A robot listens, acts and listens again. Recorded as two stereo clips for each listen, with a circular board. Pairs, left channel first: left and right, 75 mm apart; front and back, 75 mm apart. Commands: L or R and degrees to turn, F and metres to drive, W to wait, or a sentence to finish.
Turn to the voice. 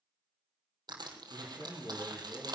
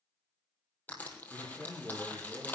L80
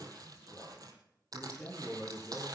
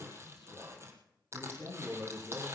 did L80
L25
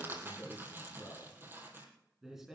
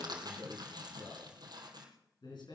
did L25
Found it: a man speaking, straight ahead.